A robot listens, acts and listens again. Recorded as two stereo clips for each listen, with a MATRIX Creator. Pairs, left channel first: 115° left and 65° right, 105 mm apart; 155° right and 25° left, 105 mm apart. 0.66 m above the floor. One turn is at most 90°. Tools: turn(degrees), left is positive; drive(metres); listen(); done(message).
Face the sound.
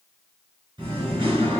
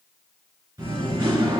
turn(degrees=-25)
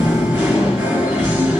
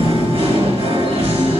done("Found it: singing, straight ahead, 2 to 4 m away.")